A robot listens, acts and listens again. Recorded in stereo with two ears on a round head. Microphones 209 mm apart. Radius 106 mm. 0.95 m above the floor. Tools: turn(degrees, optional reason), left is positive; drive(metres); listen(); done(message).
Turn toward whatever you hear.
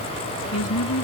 turn(degrees=65, reason="The woman speaking: about 65° left or 115° left.")
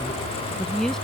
done("Facing the woman speaking.")